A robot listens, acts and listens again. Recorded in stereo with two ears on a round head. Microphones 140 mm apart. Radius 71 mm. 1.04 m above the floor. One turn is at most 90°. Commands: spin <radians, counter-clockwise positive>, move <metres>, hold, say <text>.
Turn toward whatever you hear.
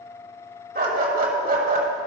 spin -0.96
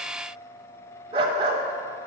spin -0.70
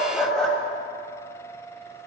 say Found it: a dog barking, straight ahead, 1 to 2 m away.